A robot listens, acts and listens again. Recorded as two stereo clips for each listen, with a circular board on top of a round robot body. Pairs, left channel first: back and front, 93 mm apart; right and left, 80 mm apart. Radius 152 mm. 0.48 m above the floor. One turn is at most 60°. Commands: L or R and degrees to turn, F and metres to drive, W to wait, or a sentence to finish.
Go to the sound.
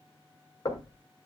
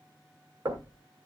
L60
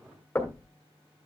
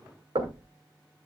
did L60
L60
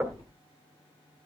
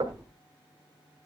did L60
L60
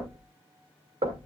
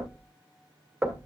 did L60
L15
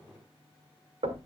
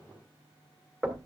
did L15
F1.0
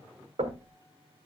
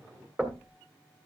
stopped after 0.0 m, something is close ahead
Something is in my way. I am facing the knocking but have not reached it.